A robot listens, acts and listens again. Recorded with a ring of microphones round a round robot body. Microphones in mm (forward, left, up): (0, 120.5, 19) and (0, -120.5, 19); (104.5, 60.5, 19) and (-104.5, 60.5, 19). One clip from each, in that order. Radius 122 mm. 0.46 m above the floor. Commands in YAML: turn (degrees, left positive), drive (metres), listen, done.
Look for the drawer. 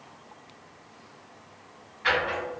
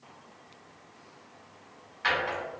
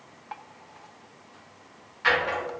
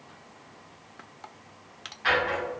turn: -60
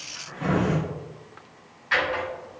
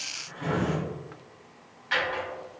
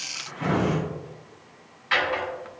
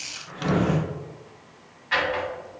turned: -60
turn: -15
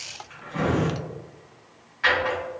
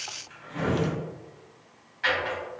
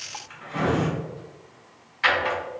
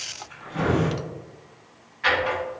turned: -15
done: "Facing the drawer, 1 to 2 m away."